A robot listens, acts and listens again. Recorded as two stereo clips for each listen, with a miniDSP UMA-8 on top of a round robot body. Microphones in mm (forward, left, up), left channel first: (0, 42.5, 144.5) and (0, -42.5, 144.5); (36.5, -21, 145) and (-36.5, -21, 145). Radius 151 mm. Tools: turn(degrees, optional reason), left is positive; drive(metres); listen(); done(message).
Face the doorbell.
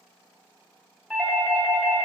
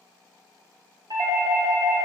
turn(degrees=180, reason="The doorbell: straight behind.")
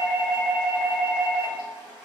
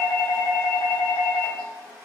turn(degrees=-25, reason="The doorbell is now 25° right.")
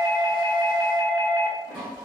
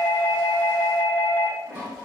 done("Found it: a doorbell, straight ahead.")